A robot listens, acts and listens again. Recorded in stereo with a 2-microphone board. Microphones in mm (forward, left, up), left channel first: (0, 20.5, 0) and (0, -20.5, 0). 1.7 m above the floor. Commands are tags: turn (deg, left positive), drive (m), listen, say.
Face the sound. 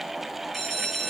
<turn deg="30"/>
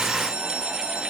<turn deg="-20"/>
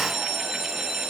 <turn deg="-10"/>
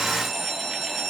<say>Found it: a bell, straight ahead, under 1 m away.</say>